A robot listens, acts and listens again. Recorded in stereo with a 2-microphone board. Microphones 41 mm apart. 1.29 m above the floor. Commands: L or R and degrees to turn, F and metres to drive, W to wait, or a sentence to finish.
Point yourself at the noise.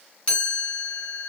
L30
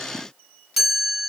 Found it: a chime, straight ahead, 2 to 4 m away.